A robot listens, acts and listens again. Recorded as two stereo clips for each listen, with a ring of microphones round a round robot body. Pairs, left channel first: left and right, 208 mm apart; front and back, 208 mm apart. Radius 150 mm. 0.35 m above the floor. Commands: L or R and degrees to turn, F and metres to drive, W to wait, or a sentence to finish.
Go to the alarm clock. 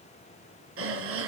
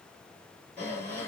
W
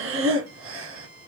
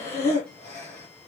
W
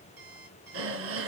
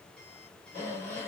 I can't make out an alarm clock to turn to.